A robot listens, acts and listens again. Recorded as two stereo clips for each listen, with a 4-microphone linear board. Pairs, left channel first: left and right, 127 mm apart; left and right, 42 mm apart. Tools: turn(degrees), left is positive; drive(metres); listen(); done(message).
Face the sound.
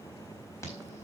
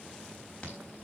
turn(degrees=25)
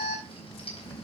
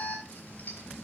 turn(degrees=125)
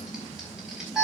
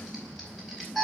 done("Found it: an alarm, straight ahead, over 4 m away.")